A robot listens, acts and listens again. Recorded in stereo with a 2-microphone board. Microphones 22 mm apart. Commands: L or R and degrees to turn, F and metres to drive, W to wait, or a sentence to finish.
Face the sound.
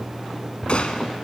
L55
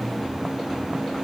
W
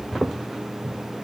I heard a gunshot, but can't make it out now. It was about straight ahead or 70° left.